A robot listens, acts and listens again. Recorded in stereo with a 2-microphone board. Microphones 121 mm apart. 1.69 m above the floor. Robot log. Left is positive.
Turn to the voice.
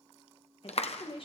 note: The woman speaking: about 50° left or 130° left.
cmd yaw +50
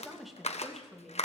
end: Facing the woman speaking, 2 to 4 m away.